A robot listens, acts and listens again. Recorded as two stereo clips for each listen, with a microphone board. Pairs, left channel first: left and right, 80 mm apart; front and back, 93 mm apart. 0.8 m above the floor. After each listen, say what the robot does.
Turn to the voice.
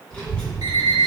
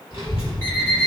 Turn 15° left.
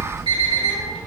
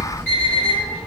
Facing the child speaking, 1 to 2 m away.